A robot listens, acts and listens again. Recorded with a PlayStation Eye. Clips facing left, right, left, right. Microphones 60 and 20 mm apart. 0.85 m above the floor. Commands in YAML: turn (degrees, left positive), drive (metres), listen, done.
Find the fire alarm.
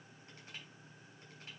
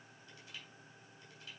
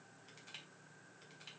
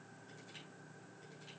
listen: true
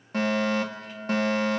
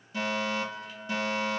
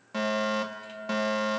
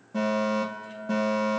turn: 55
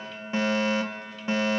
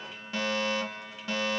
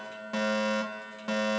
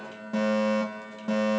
turn: 35
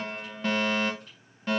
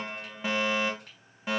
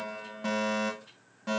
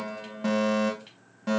turn: -10
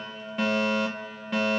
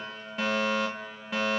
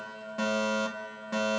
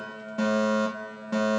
done: "Facing the fire alarm, 2 to 4 m away."